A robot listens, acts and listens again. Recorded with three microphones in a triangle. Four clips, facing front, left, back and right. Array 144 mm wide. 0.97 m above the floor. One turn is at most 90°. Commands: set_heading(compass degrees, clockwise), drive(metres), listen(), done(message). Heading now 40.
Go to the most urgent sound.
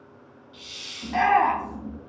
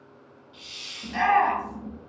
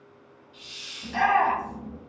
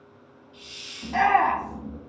set_heading(75)
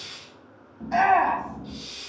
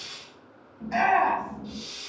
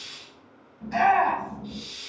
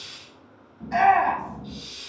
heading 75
drive(1.0)
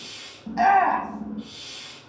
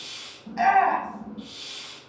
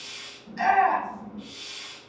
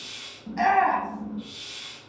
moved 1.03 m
drive(1.0)
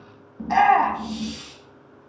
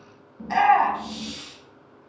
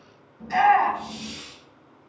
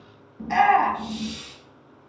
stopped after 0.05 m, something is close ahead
done("I am next to the shout.")